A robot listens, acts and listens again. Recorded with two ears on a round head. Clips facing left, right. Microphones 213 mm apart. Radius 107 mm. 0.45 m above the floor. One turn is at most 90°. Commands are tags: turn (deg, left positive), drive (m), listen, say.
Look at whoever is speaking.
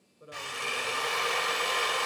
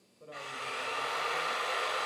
<turn deg="15"/>
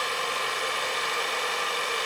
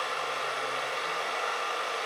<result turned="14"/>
<listen/>
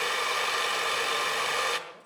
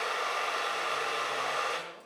<listen/>
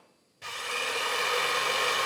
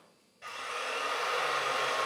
<say>I heard a man speaking, but can't make it out now. It was about straight ahead or 150° left.</say>